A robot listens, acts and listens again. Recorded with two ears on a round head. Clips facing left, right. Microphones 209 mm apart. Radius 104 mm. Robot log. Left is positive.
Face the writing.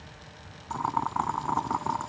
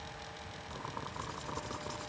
cmd idle
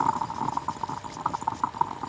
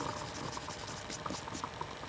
cmd idle
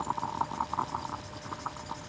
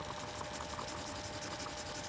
end: I can't make out writing, only boiling.